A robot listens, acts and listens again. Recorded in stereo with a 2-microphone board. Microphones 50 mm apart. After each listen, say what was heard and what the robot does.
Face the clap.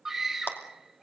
The clap: about 40° left or 140° left. Turn 40° left.
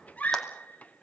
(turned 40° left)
Keep listening.
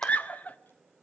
Keep listening.
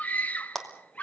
Found it: a clap, straight ahead.